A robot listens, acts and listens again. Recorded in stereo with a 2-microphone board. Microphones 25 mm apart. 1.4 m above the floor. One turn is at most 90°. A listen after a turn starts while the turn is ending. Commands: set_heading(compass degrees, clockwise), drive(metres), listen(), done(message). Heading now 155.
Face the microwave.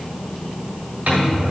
set_heading(245)
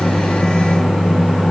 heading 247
done("Facing the microwave, 1 to 2 m away.")